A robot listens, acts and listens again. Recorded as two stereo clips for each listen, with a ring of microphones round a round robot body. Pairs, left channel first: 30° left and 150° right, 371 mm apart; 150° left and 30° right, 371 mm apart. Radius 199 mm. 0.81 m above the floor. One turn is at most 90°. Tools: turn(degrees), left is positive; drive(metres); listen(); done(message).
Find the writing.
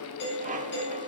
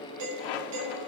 listen()
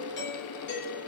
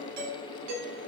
listen()
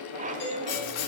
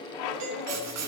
turn(degrees=15)
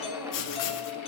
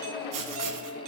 done("Facing the writing.")